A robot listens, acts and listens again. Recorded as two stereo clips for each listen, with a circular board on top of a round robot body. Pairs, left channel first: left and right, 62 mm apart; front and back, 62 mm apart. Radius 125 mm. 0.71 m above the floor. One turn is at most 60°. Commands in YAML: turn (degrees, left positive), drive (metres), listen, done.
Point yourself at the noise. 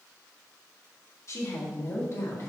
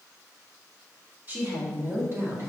turn: 60
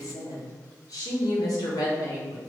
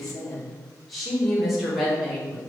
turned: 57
turn: 60
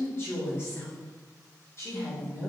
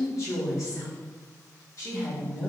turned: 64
turn: 40
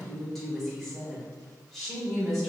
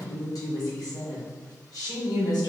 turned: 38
done: "Facing the woman speaking."